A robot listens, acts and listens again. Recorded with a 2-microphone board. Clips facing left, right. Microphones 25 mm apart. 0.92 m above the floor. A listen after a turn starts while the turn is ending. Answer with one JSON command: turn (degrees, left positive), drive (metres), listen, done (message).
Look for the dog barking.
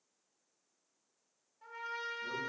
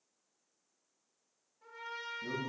{"listen": true}
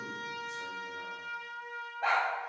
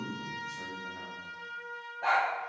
{"turn": 20}
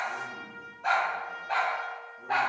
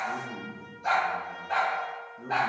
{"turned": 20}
{"turn": 130}
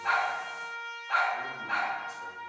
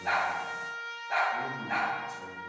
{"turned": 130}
{"turn": 45}
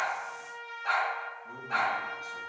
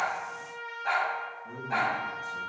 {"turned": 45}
{"done": "Found it: a dog barking, straight ahead."}